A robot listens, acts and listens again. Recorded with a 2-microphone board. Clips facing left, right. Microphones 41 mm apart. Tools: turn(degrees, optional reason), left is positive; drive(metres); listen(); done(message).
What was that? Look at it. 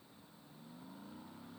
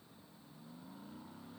listen()
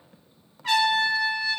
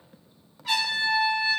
turn(degrees=60, reason="The trumpet: about 60° left or 120° left.")
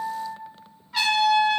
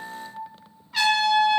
done("Found it: a trumpet, straight ahead, 1 to 2 m away.")